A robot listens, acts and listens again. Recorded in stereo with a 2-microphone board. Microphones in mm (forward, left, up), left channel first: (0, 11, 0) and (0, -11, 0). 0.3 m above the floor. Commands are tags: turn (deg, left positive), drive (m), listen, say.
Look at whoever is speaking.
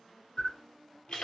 <listen/>
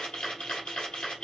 <listen/>
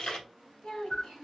<turn deg="60"/>
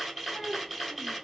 <say>Facing the child speaking.</say>